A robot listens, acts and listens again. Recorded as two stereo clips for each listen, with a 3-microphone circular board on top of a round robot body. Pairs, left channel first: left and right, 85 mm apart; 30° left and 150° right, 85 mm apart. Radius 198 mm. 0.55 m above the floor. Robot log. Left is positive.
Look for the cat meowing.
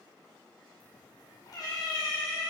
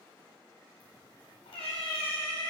note: The cat meowing: 40° left.
cmd yaw +40
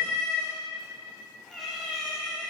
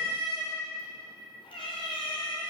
end: Found it: a cat meowing, straight ahead, 1 to 2 m away.